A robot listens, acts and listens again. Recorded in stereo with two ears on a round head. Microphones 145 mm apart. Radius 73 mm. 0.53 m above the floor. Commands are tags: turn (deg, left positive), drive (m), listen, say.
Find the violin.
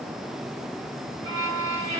<turn deg="-15"/>
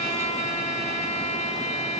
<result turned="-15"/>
<turn deg="-150"/>
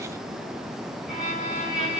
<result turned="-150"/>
<say>Found it: a violin, straight ahead, over 4 m away.</say>